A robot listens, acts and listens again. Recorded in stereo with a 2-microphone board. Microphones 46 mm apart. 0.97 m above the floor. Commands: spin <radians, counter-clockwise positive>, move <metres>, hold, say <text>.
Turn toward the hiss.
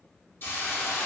spin 0.79
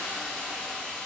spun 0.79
spin 0.17
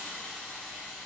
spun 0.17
say Facing the hiss, under 1 m away.